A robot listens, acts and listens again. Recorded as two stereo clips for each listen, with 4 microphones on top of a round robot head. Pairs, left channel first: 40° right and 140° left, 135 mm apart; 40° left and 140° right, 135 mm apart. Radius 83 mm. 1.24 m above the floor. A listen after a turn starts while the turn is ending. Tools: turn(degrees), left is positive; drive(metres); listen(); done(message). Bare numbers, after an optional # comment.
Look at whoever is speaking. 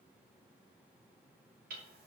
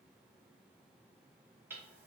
listen()
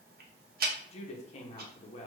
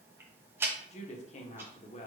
done("Facing the woman speaking, under 1 m away.")